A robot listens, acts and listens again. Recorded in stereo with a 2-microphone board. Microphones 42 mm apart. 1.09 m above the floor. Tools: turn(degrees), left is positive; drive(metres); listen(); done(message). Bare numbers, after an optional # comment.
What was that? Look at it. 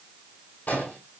# The explosion: about 50° left or 130° left.
turn(50)
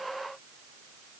listen()
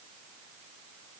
done("I heard an explosion, but can't make it out now. It was about straight ahead or 80° left.")